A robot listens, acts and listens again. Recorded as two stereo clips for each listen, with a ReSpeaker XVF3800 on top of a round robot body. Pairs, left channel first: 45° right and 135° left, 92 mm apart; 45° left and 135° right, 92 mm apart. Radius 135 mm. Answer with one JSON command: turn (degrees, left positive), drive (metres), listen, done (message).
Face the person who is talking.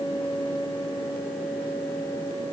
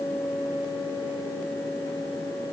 {"listen": true}
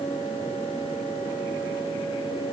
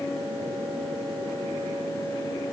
{"listen": true}
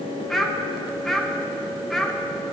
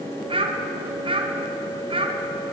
{"turn": -130}
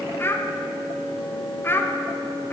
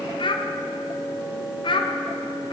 {"turn": 20}
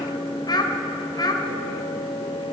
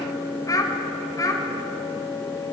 {"done": "Found it: a child speaking, straight ahead."}